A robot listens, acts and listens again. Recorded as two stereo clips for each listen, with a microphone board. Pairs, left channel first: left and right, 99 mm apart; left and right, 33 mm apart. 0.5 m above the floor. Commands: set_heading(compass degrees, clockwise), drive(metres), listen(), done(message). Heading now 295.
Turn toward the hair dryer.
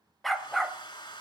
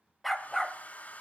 set_heading(245)
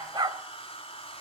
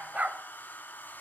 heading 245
set_heading(165)
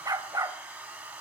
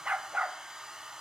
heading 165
set_heading(180)
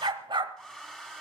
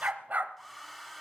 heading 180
done("Found it: a hair dryer, straight ahead.")